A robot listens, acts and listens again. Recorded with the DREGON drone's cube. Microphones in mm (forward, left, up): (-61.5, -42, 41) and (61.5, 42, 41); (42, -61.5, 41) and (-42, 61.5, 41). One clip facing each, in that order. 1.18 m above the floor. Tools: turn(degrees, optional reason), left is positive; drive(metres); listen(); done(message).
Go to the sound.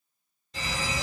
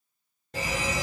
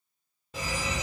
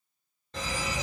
turn(degrees=25, reason="The fire alarm: 25° left.")
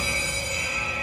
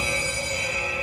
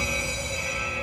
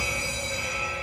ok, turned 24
drive(metres=1.0)
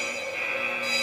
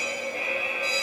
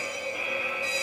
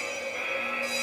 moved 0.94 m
turn(degrees=10, reason="The fire alarm is now 10° left.")
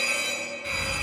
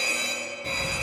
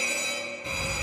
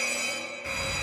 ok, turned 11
drive(metres=1.0)
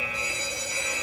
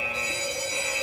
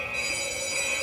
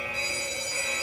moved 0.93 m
drive(metres=1.0)
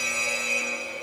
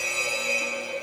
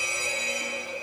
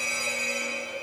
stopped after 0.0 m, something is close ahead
done("I am next to the fire alarm.")